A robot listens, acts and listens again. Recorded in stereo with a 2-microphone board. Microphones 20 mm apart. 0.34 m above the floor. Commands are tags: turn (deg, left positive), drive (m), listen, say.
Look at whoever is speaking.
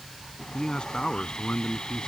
<turn deg="55"/>
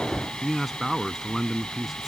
<say>Found it: a man speaking, straight ahead.</say>